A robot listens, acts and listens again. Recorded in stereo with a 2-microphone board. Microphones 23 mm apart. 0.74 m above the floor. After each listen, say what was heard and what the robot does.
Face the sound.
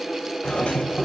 The doorbell: about 55° left or 125° left. Turn 55° left.
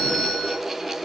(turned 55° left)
So it is at 70° left. Turn 70° left.
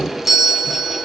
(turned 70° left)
The doorbell is now 10° right. Turn 10° right.
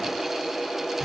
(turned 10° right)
Keep listening.
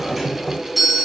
Facing the doorbell, over 4 m away.